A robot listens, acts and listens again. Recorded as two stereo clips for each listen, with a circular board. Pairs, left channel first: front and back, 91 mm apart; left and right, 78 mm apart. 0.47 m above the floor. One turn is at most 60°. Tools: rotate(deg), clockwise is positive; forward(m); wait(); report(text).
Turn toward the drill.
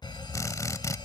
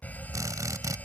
rotate(50)
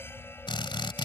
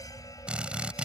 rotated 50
rotate(15)
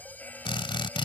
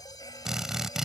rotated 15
report("Found it: a drill, straight ahead.")